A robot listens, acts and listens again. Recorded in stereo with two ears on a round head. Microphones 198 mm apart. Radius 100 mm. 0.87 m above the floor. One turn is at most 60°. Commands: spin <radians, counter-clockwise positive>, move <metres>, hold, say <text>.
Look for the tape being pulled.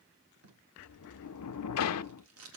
spin -1.05
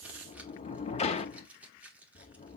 say Facing the tape being pulled, 1 to 2 m away.